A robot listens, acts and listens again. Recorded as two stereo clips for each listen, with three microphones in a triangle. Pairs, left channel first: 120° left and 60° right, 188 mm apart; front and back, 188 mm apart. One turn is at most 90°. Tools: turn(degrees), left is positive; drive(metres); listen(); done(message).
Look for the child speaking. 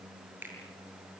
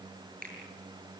listen()
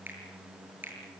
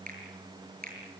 listen()
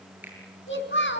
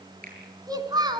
turn(degrees=90)
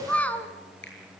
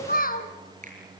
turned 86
turn(degrees=40)
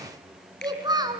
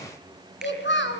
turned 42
turn(degrees=10)
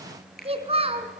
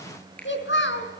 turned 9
done("Facing the child speaking.")